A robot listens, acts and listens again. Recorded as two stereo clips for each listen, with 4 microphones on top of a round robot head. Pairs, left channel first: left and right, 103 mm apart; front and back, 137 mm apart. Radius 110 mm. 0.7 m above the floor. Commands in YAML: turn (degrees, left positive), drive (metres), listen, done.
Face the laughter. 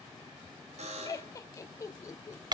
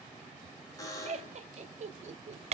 turn: 145
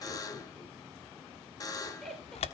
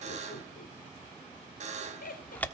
done: "Found it: laughter, straight ahead."